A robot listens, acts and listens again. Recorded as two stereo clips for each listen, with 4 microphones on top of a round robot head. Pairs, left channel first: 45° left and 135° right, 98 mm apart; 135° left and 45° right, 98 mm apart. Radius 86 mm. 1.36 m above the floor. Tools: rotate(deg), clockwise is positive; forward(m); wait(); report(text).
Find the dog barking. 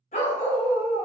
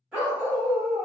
rotate(-35)
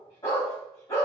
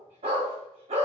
rotate(15)
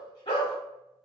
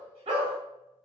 report("Found it: a dog barking, straight ahead.")